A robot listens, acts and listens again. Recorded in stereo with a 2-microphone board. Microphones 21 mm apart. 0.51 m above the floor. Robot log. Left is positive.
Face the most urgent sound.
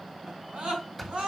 note: The scream: about 65° right or 115° right.
cmd yaw -65
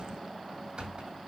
cmd idle
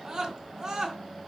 note: So it is at 45° right.
cmd yaw -45
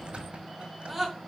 end: Facing the scream, over 4 m away.